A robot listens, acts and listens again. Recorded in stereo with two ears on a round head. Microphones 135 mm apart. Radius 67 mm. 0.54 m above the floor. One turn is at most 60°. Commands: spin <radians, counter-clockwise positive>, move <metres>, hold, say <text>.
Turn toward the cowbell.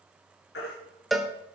spin 0.52
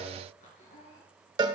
spin -0.61
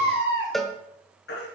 say Found it: a cowbell, straight ahead.